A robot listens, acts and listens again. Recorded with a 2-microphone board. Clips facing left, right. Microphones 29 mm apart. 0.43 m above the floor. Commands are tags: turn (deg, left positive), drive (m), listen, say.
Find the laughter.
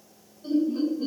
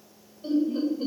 <turn deg="-55"/>
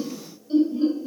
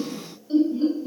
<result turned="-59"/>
<turn deg="-15"/>
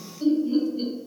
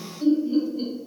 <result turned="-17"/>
<say>Facing the laughter, 1 to 2 m away.</say>